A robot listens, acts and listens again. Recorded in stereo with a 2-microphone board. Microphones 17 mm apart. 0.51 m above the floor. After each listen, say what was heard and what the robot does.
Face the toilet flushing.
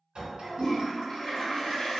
The toilet flushing: about 70° left or 110° left. Turn 70° left.
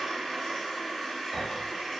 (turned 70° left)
So it is at 40° left. Turn 40° left.
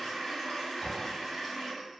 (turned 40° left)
The toilet flushing is now 30° left. Turn 30° left.
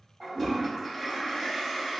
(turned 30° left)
The toilet flushing is now 20° left. Turn 20° left.
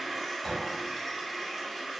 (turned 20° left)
Found it: a toilet flushing, straight ahead.